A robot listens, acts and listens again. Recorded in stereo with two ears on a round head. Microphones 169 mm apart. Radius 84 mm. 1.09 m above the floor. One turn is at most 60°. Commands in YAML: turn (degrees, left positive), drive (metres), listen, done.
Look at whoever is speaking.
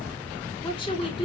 turn: 30
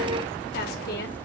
listen: true
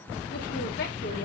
listen: true
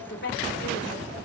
turn: 60
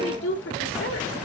turn: 60
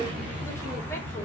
turn: 10
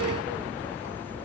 listen: true
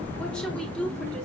done: "Found it: a woman speaking, straight ahead."